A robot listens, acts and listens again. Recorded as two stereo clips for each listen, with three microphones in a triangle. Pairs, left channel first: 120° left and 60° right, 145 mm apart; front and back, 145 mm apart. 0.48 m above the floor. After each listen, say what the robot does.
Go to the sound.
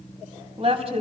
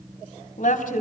Turn 15° right.
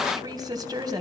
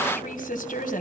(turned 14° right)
Drive 1.0 m forward.
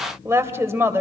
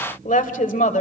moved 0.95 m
Turn 10° left.
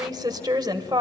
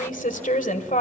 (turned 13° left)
Drive 1.0 m forward.
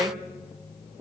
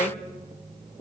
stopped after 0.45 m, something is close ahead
I am next to the woman speaking.